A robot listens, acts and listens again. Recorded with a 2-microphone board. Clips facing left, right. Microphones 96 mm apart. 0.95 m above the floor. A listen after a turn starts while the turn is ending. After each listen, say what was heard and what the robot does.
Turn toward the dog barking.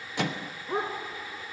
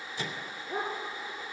The dog barking: about 70° left or 110° left. Turn 70° left.
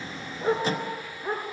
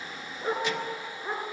Found it: a dog barking, straight ahead.